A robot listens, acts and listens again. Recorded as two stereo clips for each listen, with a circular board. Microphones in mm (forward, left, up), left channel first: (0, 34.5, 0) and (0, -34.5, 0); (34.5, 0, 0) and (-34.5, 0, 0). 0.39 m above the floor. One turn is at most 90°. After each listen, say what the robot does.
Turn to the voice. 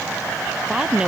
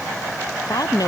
Turn 15° right.
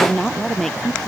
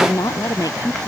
Facing the woman speaking.